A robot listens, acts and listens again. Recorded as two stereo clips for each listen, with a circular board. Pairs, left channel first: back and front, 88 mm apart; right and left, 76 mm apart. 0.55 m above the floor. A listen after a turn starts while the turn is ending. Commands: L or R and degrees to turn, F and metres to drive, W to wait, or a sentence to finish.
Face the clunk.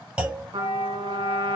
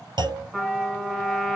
L75
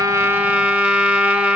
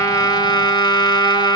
I heard a clunk from this way, but can't make it out now.